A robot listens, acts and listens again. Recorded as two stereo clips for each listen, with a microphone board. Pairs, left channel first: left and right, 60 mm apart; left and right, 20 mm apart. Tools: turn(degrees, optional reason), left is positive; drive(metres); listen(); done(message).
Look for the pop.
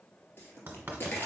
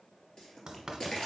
turn(degrees=40, reason="The pop: about 40° left or 140° left.")
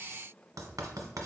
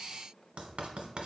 listen()
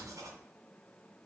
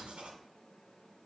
done("I heard a pop, but can't make it out now. It was about straight ahead or 100° left.")